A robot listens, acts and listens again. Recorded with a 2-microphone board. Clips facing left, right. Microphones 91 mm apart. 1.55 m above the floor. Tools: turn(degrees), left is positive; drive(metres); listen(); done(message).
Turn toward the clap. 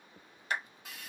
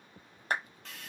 turn(degrees=-40)
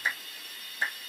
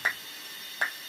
turn(degrees=-90)
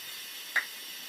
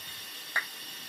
turn(degrees=-20)
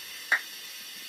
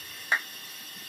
done("Facing the clap, under 1 m away.")